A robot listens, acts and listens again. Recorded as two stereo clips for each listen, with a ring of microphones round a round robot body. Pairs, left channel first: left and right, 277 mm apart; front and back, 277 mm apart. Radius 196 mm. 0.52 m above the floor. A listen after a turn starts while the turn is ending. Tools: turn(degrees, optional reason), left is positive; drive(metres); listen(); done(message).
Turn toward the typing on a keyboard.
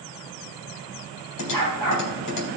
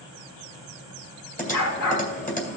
turn(degrees=60, reason="The typing on a keyboard: 60° left.")
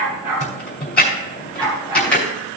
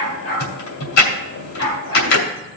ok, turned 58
done("Found it: typing on a keyboard, straight ahead, 2 to 4 m away.")